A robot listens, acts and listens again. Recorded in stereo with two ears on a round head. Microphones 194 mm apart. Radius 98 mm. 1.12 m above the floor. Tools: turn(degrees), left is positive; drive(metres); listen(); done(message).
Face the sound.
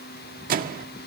turn(degrees=-45)
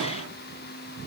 listen()
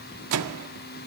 turn(degrees=-90)
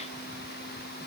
listen()
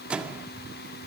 done("Found it: a microwave, straight ahead, 1 to 2 m away.")